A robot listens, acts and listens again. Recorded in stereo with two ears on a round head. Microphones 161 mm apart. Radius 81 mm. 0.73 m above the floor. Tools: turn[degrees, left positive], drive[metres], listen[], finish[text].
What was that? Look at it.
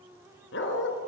Thought: The dog barking: about 75° left or 105° left.
Action: turn[75]
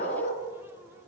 Thought: So it is at 40° left.
Action: turn[40]
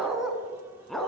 Action: finish[Found it: a dog barking, straight ahead, 2 to 4 m away.]